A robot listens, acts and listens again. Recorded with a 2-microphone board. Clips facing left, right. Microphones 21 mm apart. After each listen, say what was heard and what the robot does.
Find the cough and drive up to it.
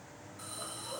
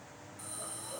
Keep listening.
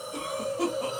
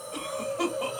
The cough: about 35° right or 145° right. Turn 35° right.
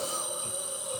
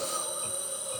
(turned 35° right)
Keep listening.
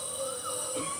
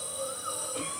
Drive 1.0 m forward.
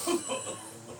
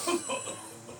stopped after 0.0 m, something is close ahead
Blocked. The cough is further on, straight ahead.